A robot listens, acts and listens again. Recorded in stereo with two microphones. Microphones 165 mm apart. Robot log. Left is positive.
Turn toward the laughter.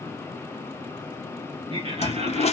note: The laughter: about 40° right or 140° right.
cmd yaw -40
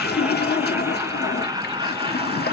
note: The laughter: about 30° right or 150° right.
cmd yaw -30
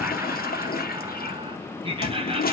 note: The laughter: about 35° right or 145° right.
cmd yaw -35
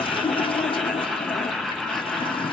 end: Facing the laughter, 1 to 2 m away.